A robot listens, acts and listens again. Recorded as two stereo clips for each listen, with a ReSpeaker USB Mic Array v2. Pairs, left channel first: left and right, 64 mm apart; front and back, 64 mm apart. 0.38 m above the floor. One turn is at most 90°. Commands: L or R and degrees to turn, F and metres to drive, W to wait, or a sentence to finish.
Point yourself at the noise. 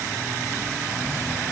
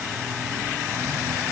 W
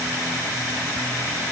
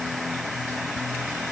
W
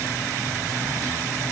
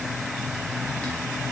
I can't make out anything to turn to.